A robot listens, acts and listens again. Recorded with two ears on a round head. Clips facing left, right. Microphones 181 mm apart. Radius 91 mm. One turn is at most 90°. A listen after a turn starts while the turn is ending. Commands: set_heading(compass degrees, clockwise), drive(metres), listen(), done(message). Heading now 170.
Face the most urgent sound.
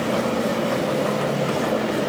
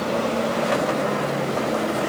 listen()
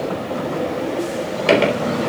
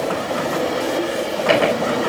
listen()
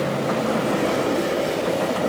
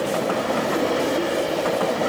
done("I can't make out anything urgent to turn to.")